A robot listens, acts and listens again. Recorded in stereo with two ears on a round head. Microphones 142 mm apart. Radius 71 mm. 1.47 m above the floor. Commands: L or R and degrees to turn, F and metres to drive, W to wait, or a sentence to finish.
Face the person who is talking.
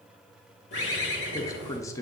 L20
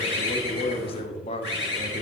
L140
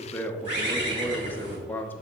L15
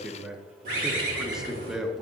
Facing the man speaking, under 1 m away.